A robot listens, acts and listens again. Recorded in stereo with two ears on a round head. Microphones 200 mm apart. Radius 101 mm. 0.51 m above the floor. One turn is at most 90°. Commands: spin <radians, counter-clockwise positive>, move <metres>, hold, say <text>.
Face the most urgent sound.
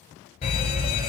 spin 0.61
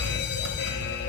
spin 1.57
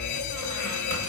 spin 1.13
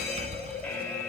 spin 0.26
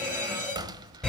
say Facing the fire alarm.